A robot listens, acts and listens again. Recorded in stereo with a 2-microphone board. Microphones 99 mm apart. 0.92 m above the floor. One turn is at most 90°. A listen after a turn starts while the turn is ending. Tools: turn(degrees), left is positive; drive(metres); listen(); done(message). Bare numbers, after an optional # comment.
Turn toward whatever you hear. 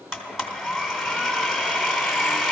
turn(-30)
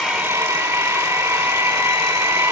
# So it is at 145° right.
turn(-90)
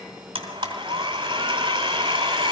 # The blender is now 50° right.
turn(-50)
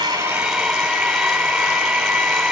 done("Found it: a blender, straight ahead.")